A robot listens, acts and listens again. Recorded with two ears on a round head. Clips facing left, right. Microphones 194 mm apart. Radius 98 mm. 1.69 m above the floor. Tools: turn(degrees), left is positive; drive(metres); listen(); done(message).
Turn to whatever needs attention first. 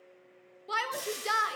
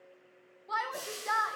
turn(degrees=40)
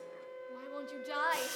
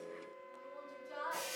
turn(degrees=95)
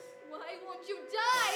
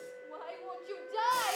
turn(degrees=25)
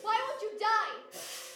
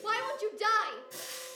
turn(degrees=-20)
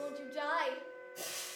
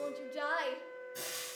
done("Found it: a shout, straight ahead, 1 to 2 m away.")